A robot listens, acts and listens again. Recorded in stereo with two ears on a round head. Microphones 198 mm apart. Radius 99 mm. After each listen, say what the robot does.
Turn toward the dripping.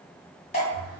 Turn 30° left.
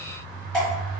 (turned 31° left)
Facing the dripping, 1 to 2 m away.